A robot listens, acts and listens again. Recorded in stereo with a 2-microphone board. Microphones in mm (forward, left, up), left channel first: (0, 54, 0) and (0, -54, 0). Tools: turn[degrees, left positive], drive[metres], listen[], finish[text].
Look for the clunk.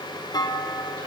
Thought: The clunk: about 40° left or 140° left.
Action: turn[40]
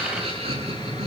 Action: listen[]
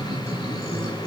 Action: finish[I heard a clunk, but can't make it out now. It was about straight ahead or 100° left.]